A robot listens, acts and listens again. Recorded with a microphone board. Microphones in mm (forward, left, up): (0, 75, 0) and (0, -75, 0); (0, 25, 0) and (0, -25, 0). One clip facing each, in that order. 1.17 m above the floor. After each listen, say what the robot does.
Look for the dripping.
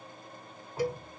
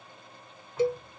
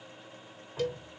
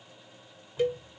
Turn 35° left.
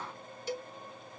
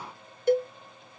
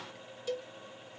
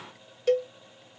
Keep listening.
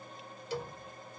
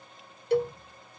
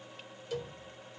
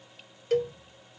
Facing the dripping.